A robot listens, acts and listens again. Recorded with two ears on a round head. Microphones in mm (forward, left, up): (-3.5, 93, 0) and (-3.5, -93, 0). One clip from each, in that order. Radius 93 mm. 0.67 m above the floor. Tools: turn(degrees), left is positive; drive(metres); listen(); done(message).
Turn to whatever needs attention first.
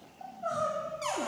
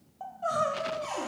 turn(degrees=-25)
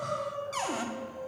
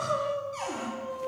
turn(degrees=-130)
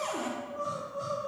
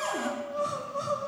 turn(degrees=-30)
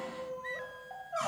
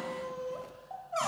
turn(degrees=-10)
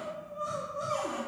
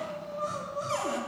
done("Facing the crying.")